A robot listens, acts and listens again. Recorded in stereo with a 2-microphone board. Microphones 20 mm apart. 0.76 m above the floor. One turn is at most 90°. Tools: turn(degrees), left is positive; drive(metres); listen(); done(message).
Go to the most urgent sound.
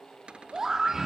turn(degrees=-20)
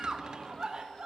turn(degrees=-90)
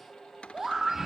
turn(degrees=-25)
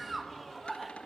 turn(degrees=-10)
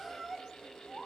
drive(metres=1.0)
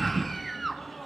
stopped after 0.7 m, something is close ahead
done("I am next to the scream.")